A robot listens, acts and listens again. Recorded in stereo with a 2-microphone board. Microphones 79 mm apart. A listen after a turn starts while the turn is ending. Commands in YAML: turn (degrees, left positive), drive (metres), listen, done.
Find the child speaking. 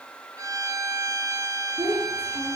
turn: -20
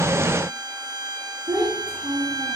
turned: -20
turn: -140
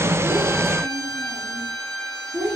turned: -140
turn: -25
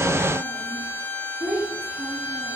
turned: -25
done: "Facing the child speaking."